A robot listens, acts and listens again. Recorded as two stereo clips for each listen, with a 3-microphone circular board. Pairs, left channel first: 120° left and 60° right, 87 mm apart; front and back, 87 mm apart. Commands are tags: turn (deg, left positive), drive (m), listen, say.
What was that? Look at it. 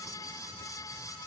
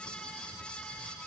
<listen/>
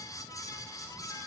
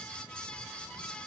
<listen/>
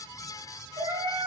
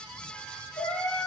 <turn deg="-50"/>
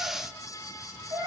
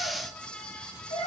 <turn deg="-15"/>
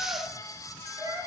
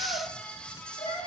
<turn deg="-10"/>
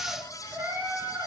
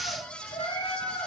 <say>Facing the cat meowing.</say>